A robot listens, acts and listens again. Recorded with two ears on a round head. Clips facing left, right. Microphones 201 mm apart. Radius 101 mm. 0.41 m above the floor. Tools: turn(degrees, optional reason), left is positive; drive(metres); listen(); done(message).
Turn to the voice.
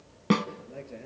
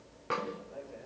turn(degrees=35, reason="The man speaking: about 35° left or 145° left.")
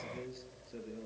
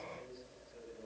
turn(degrees=110, reason="So it is at 110° left.")
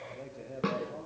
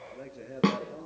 turn(degrees=-25, reason="The man speaking is now 25° right.")
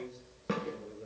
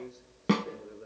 listen()
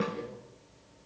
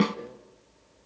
listen()
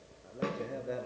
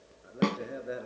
turn(degrees=-15, reason="The man speaking is now 15° right.")
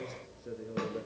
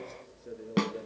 done("Found it: a man speaking, straight ahead, over 4 m away.")